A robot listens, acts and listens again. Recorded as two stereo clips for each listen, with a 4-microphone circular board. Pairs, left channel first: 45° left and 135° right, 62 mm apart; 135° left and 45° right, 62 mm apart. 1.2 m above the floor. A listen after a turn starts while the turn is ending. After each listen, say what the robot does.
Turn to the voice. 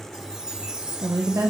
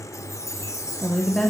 Turn 150° right.
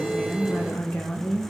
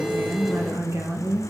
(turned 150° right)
Turn 10° right.
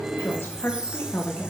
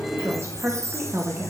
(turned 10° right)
Found it: a woman speaking, straight ahead, 1 to 2 m away.